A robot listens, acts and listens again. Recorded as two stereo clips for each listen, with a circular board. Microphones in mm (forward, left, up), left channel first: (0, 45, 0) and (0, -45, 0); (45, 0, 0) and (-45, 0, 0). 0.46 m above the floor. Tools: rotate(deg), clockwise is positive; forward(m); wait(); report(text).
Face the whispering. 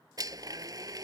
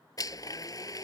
wait()
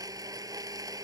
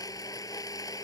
wait()
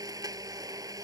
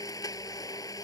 report("I can't make out whispering, only a blender.")